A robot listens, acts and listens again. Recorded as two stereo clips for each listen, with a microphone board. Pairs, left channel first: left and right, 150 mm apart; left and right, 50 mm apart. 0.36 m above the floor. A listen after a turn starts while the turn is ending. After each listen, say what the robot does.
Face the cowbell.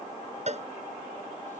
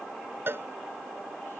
Turn 50° right.
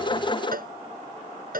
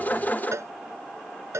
Turn 80° right.
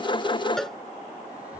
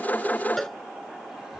Found it: a cowbell, straight ahead.